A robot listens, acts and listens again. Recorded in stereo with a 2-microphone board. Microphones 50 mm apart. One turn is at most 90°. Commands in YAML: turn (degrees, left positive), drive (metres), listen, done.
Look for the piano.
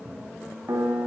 turn: -90
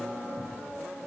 listen: true
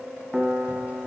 turn: -10
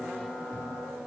listen: true
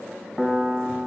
done: "Facing the piano."